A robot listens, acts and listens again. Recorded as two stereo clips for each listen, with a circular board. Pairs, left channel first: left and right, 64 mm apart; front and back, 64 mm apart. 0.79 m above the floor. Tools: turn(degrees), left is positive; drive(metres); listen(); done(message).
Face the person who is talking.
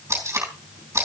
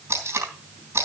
listen()
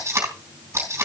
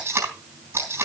listen()
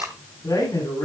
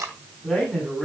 turn(degrees=80)
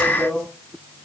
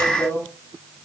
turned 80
turn(degrees=15)
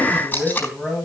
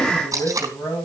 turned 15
turn(degrees=10)
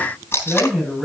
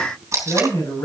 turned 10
done("Found it: a man speaking, straight ahead, over 4 m away.")